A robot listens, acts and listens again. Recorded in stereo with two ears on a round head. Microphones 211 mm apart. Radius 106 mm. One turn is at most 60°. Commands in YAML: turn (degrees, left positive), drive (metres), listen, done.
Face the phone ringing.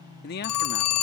turn: 60
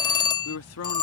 turn: 20
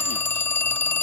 turn: 10
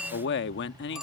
done: "Found it: a phone ringing, straight ahead."